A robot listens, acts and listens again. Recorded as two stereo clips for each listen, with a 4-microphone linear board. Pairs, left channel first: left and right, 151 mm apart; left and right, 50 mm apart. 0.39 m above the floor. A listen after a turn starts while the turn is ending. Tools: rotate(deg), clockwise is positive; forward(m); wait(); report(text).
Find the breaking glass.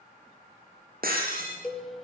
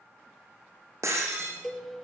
rotate(90)
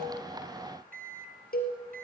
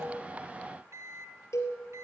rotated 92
report("I heard breaking glass from this way, but can't make it out now.")